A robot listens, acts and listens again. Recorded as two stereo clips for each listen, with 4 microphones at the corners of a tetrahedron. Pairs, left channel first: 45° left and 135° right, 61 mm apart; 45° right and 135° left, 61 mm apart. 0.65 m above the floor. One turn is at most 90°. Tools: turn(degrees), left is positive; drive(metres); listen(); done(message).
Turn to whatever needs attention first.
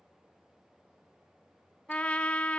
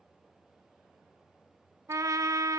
listen()
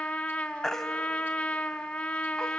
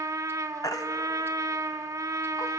turn(degrees=-35)
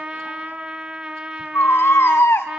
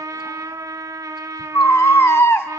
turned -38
done("Facing the baby crying, 1 to 2 m away.")